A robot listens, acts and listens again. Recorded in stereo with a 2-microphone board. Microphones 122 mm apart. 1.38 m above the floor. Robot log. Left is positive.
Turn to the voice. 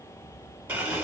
cmd idle
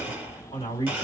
note: The man speaking: about 40° left or 140° left.
cmd yaw +40
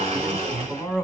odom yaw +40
end: Found it: a man speaking, straight ahead, 1 to 2 m away.